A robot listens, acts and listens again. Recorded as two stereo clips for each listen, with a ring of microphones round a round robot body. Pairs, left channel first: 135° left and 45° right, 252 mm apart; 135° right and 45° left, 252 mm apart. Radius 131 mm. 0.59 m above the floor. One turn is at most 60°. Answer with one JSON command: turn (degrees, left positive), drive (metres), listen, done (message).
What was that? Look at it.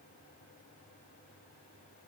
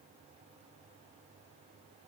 {"listen": true}
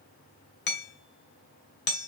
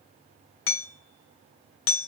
{"turn": -60}
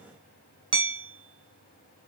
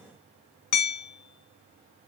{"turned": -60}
{"turn": -60}
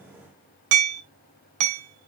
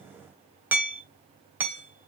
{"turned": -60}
{"turn": -40}
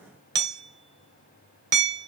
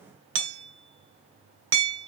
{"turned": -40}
{"done": "Found it: hammering, straight ahead, 2 to 4 m away."}